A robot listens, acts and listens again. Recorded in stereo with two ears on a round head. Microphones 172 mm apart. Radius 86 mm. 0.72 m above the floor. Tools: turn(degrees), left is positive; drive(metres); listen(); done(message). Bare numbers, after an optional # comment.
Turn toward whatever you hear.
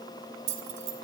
# The keys jangling: about 45° right or 135° right.
turn(-45)
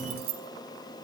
# So it is at 80° right.
turn(-80)
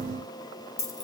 # The keys jangling is now 20° left.
turn(20)
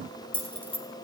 # The keys jangling is now 10° left.
turn(10)
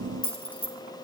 # The keys jangling is now 10° left.
turn(10)
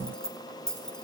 done("Found it: keys jangling, straight ahead.")